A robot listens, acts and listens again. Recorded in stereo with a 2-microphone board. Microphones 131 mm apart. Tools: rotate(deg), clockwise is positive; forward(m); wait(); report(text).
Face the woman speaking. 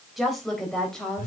rotate(-30)
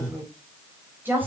rotate(15)
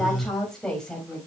report("Facing the woman speaking.")